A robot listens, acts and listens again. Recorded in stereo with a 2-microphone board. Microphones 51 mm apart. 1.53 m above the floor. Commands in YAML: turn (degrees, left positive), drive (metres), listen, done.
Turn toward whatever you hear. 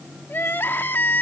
turn: 40
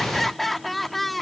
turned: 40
done: "Found it: crying, straight ahead."